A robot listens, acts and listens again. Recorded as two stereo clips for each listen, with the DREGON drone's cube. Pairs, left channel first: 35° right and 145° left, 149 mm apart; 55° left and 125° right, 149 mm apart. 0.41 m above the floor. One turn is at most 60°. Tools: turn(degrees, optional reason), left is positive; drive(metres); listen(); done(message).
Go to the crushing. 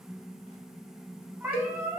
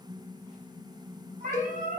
listen()
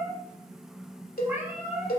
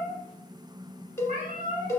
listen()
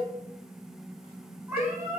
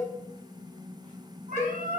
done("I can't make out crushing to turn to.")